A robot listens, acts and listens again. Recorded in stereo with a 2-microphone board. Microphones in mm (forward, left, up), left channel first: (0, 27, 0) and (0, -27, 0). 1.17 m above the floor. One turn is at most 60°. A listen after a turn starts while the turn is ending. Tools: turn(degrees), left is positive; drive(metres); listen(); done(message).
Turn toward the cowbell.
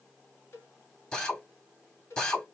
turn(degrees=50)
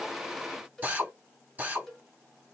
done("Found it: a cowbell, straight ahead.")